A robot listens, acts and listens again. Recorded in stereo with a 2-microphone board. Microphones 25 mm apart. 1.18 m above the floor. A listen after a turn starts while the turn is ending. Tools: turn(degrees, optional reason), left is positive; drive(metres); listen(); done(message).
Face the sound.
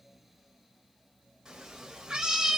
turn(degrees=-25, reason="The cat meowing: about 25° right or 155° right.")
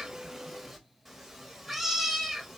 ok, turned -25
done("Facing the cat meowing, 1 to 2 m away.")